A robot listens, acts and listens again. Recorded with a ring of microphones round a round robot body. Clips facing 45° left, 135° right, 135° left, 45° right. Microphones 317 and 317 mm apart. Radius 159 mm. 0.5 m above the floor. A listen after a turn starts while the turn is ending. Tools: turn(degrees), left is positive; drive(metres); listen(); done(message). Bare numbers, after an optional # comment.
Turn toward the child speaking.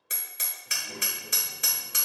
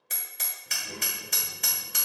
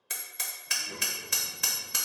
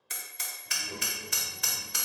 # The child speaking: 100° right.
turn(-100)
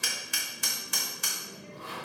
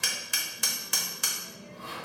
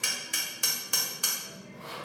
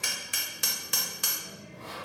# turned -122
done("Found it: a child speaking, straight ahead.")